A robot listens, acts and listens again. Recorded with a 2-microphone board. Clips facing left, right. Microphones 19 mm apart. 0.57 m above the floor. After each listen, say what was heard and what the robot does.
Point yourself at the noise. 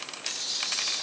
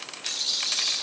The rattle: about 45° right or 135° right. Turn 45° right.
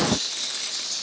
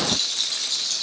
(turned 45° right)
So it is at 90° right. Turn 90° right.
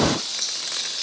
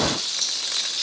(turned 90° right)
The rattle is now 40° right. Turn 40° right.
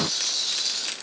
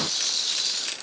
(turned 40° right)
The rattle is now 15° right. Turn 15° right.
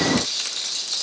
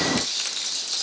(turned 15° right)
Facing the rattle.